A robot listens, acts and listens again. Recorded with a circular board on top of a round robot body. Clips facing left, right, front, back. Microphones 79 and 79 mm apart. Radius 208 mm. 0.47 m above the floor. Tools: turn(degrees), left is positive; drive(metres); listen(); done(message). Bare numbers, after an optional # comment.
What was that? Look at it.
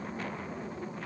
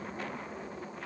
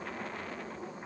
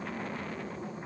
listen()
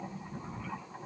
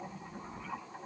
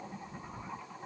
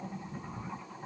listen()
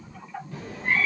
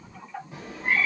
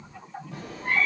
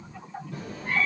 # The cat meowing: 20° right.
turn(-20)
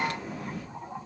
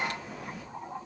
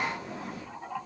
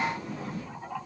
done("Found it: a cat meowing, straight ahead, 2 to 4 m away.")